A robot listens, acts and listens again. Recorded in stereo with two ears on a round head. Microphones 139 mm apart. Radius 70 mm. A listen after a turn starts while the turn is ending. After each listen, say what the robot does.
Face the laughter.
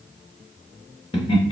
Turn 35° left.
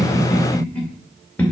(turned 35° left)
Turn 10° left.
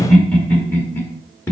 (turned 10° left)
Turn 15° left.
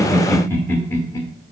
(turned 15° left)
Turn 20° left.
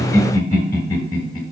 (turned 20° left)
Turn 25° left.
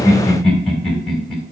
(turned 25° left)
Facing the laughter.